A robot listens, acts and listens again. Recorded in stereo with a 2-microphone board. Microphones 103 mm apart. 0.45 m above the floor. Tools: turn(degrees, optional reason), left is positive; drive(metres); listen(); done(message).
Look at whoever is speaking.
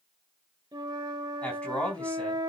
turn(degrees=30)
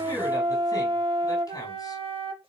turn(degrees=140, reason="So it is at 140° left.")
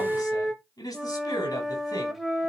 turn(degrees=40, reason="The man speaking is now 40° left.")
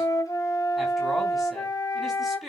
done("Facing the man speaking.")